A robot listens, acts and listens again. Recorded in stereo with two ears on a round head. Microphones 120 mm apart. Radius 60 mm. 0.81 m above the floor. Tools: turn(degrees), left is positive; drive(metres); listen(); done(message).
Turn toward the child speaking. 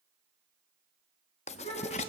turn(degrees=45)
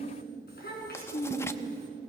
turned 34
turn(degrees=95)
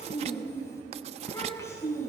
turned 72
turn(degrees=20)
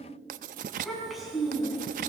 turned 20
done("Facing the child speaking.")